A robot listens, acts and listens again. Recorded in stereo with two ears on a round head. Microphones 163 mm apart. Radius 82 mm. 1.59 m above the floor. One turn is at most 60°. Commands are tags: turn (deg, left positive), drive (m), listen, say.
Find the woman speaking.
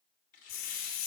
<listen/>
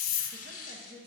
<turn deg="-50"/>
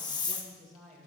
<say>Found it: a woman speaking, straight ahead.</say>